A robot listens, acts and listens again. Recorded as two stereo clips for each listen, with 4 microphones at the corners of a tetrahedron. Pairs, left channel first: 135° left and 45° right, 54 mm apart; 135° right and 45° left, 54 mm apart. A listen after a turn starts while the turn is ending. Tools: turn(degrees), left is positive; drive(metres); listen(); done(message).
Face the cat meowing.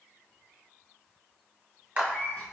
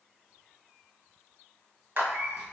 turn(degrees=85)
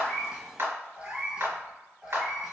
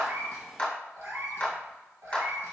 turn(degrees=40)
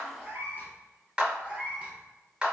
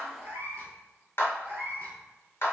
turn(degrees=20)
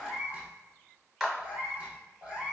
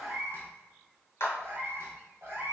done("Found it: a cat meowing, straight ahead, 1 to 2 m away.")